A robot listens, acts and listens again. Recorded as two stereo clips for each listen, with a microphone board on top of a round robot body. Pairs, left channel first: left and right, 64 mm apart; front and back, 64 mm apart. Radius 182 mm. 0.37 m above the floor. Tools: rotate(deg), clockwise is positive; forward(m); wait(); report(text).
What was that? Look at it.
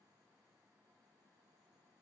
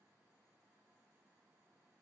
wait()
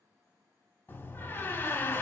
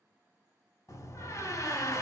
rotate(-35)
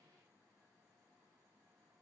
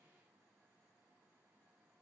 report("Facing where the door slam came from. I can't hear it now.")